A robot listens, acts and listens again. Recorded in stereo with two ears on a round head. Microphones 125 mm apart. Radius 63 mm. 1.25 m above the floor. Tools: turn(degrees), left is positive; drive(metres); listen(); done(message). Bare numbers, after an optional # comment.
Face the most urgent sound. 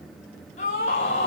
# The scream: about 55° left or 125° left.
turn(55)
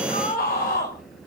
# So it is at 65° left.
turn(65)
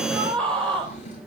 done("Found it: a scream, straight ahead, over 4 m away.")